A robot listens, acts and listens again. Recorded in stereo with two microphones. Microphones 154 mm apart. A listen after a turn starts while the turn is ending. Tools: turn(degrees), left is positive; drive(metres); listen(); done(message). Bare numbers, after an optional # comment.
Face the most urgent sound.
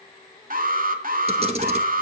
# The alarm: about 65° right or 115° right.
turn(-65)
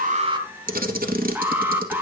# So it is at 15° right.
turn(-15)
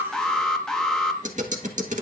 done("Found it: an alarm, straight ahead.")